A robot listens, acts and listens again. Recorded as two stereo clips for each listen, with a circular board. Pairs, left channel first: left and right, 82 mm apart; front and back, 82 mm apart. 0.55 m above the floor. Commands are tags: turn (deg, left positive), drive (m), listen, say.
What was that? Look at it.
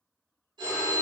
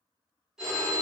<turn deg="-95"/>
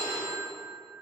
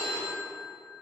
<turn deg="-55"/>
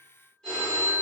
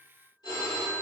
<turn deg="15"/>
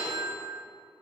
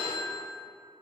<say>Found it: a phone ringing, straight ahead.</say>